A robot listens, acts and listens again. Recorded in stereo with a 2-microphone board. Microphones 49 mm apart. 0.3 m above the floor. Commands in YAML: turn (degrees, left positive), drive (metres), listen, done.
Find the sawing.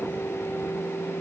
listen: true
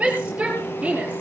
listen: true
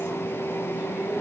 done: "I can't make out sawing, only a shout."